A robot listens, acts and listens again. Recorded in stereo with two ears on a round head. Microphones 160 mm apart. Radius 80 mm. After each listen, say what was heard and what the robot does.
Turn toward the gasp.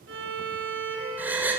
Turn 30° right.
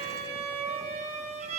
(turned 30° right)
Keep listening.
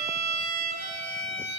I heard a gasp, but can't make it out now. It was about 20° left or 140° right.